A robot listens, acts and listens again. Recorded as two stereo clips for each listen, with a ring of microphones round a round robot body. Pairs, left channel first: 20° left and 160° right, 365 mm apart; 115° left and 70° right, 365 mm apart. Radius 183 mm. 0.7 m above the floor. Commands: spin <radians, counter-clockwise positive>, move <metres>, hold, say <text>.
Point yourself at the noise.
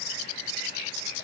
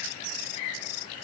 hold
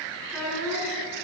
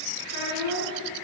spin 1.92
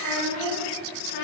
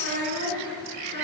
say Found it: a child speaking, straight ahead, 2 to 4 m away.